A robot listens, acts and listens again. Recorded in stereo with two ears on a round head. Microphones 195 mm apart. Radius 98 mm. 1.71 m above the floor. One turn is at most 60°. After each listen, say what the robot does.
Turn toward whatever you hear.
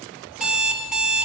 Turn 30° right.
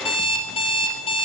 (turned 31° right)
Turn 25° left.
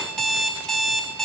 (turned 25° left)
Found it: an alarm clock, straight ahead.